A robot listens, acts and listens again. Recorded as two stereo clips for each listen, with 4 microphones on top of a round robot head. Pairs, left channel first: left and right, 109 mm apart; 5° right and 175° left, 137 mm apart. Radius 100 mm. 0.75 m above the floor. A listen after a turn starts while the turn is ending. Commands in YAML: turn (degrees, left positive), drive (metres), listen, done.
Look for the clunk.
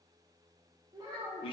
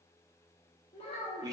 listen: true
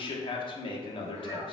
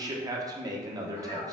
listen: true
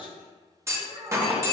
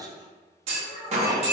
turn: -150
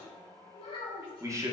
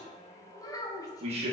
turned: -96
turn: -55
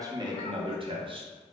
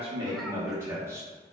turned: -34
turn: -20
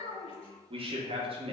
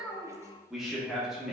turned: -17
done: "Facing where the clunk came from. I can't hear it now."